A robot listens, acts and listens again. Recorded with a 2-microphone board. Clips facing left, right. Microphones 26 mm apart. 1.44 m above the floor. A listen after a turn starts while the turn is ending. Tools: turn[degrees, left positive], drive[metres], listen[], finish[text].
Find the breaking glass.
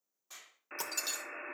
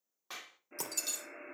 Thought: The breaking glass: about 15° left or 165° left.
Action: turn[15]
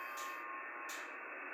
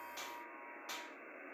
Action: listen[]
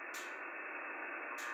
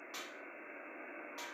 Action: finish[I heard breaking glass, but can't make it out now. It was about straight ahead or 150° left.]